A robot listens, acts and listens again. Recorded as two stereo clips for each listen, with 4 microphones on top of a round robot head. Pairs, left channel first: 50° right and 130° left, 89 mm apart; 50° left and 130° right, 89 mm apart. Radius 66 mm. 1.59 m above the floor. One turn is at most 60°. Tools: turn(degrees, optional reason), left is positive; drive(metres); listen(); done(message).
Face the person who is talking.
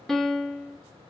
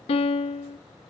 listen()
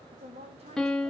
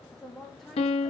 turn(degrees=60, reason="The woman speaking: 135° left.")
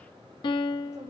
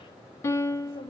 turn(degrees=60, reason="Nothing new. It was at 75° left.")
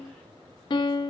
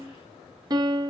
turn(degrees=15, reason="Nothing new. It was at 15° left.")
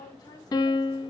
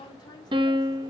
done("Facing the woman speaking, 2 to 4 m away.")